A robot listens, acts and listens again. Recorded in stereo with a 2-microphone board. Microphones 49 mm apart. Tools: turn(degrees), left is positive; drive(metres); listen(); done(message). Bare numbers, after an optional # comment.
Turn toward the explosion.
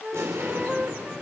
turn(-90)
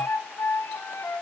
done("Facing where the explosion came from. I can't hear it now.")